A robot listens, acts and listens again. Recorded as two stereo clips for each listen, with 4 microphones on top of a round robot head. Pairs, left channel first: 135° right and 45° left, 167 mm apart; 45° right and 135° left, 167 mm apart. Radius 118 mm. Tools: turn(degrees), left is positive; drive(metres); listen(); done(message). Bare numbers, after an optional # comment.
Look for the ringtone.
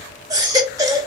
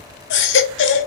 listen()
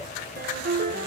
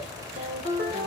# The ringtone: 85° left.
turn(85)
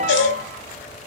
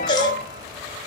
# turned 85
listen()
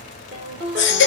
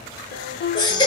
done("Facing the ringtone.")